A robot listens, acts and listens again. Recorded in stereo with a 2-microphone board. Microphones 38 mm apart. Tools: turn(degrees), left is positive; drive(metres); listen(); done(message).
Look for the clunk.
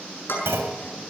turn(degrees=-90)
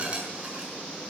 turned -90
done("I heard a clunk from this way, but can't make it out now.")